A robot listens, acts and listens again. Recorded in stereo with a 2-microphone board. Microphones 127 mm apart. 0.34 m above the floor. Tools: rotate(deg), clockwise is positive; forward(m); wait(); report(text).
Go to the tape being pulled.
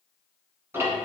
wait()
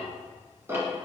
wait()
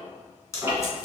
rotate(-25)
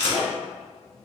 rotate(-130)
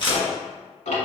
rotate(-45)
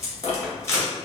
rotate(-25)
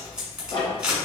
forward(1.0)
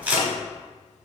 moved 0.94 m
rotate(15)
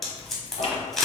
forward(1.0)
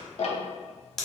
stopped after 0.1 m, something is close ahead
report("Arrived at the tape being pulled, straight ahead.")